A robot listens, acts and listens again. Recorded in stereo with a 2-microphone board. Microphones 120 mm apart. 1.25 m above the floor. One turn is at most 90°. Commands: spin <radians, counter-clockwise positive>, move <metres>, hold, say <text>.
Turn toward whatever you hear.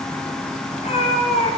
spin 1.13
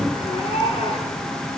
spin 0.87
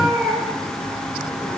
say Found it: a cat meowing, straight ahead.